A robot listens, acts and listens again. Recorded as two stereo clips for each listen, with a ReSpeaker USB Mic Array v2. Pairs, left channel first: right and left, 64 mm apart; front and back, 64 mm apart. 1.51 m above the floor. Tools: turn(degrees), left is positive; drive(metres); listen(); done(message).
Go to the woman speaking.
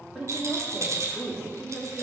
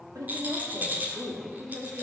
turn(degrees=170)
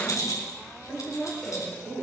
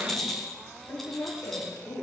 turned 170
turn(degrees=-35)
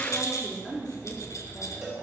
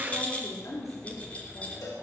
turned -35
turn(degrees=-15)
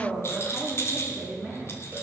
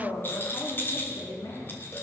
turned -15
drive(metres=1.0)
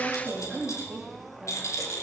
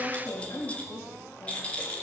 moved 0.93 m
drive(metres=1.0)
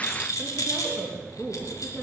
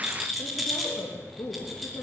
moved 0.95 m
drive(metres=1.0)
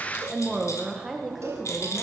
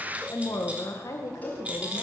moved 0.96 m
drive(metres=1.0)
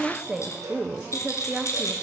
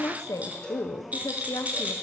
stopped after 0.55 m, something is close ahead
turn(degrees=10)
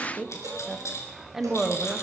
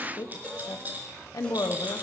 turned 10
done("I am next to the woman speaking.")